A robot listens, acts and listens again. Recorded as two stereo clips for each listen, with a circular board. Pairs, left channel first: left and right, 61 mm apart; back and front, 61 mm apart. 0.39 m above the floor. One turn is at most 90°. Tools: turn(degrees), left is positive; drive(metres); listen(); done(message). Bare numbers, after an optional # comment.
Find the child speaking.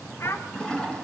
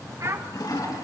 # The child speaking: 40° left.
turn(40)
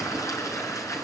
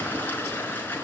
listen()
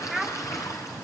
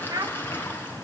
done("Facing the child speaking.")